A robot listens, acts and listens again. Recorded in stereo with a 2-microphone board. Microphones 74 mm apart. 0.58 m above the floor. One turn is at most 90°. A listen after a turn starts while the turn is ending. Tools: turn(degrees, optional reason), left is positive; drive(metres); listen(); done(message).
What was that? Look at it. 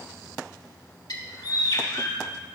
turn(degrees=65, reason="The bird: about 65° left or 115° left.")
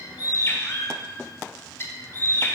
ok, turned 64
turn(degrees=40, reason="So it is at 40° left.")
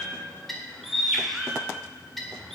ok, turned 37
done("Facing the bird, 1 to 2 m away.")